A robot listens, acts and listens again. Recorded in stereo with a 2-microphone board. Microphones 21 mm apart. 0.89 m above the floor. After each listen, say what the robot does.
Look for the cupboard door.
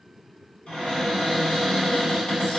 Turn 55° left.
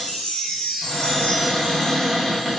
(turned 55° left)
Facing the cupboard door, 1 to 2 m away.